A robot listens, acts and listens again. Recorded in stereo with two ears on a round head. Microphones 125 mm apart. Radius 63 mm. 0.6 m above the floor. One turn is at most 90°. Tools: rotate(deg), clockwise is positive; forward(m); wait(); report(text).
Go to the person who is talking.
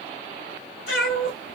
wait()
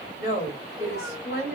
rotate(-20)
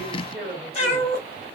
forward(1.0)
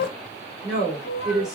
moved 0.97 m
forward(1.0)
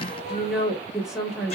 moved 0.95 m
forward(1.0)
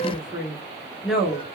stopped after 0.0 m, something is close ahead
report("I am next to the woman speaking.")